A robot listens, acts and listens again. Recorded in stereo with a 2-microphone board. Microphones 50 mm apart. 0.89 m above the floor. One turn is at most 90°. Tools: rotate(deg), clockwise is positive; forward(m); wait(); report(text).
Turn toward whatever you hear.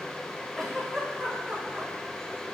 rotate(-15)
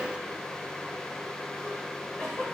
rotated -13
rotate(-90)
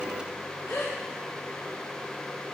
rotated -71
rotate(-80)
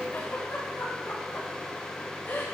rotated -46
rotate(-35)
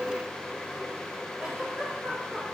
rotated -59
rotate(25)
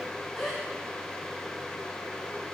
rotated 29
report("Facing the giggle, 2 to 4 m away.")